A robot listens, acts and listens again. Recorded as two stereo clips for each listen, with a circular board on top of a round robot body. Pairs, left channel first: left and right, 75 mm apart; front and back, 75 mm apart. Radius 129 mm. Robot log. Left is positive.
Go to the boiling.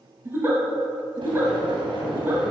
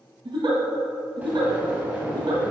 note: The boiling: 110° right.
cmd yaw -110
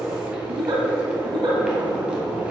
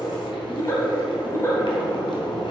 note: The boiling is now 15° right.
cmd yaw -15
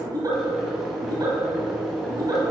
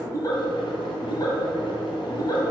cmd fwd 1.0
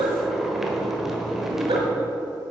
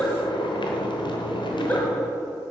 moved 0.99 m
cmd fwd 1.0
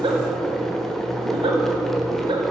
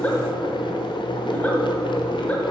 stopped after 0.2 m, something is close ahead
end: Arrived at the boiling, straight ahead.